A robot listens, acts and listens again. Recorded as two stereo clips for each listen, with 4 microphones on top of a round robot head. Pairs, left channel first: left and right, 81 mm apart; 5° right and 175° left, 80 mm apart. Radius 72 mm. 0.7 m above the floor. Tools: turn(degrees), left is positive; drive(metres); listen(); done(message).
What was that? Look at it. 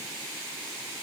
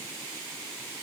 listen()
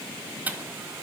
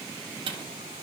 turn(degrees=-160)
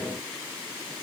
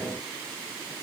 done("Facing where the dropped coin came from. I can't hear it now.")